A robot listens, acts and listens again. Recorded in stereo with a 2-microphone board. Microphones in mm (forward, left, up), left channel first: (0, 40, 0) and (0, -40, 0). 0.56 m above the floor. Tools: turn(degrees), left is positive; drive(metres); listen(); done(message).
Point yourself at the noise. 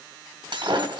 turn(degrees=-90)
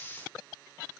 done("I heard breaking glass from this way, but can't make it out now.")